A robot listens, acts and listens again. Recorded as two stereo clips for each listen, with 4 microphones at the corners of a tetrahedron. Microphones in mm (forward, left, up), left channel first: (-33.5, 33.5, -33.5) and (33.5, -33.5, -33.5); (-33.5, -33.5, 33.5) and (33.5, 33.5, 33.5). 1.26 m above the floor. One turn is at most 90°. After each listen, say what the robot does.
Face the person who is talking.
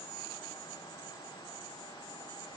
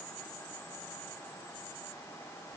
Keep listening.
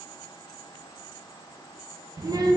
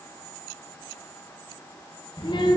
Turn 90° right.
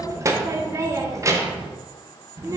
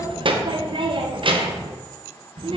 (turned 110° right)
Turn 15° left.
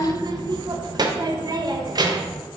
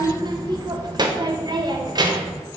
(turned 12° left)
Found it: a child speaking, straight ahead.